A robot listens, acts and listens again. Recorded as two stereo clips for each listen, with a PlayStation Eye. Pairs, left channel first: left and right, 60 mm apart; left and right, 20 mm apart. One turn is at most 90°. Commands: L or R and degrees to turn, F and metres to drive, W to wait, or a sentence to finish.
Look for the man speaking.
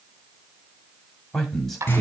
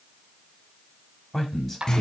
L30
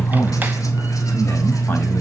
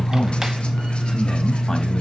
W
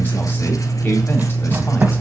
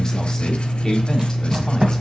W
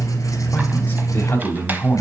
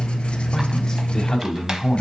L90
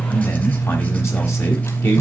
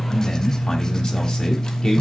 L60
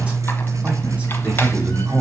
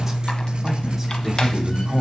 R25
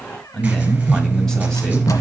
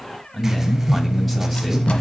L10
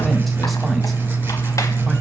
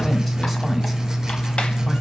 W
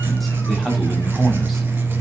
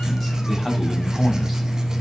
Found it: a man speaking, straight ahead, 1 to 2 m away.